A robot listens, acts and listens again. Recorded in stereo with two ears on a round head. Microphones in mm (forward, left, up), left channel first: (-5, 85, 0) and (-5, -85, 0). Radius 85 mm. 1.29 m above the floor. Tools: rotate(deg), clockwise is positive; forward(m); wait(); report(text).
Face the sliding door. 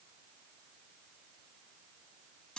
wait()
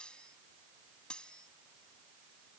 wait()
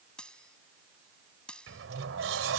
rotate(75)
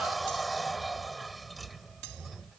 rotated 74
report("Found it: a sliding door, straight ahead.")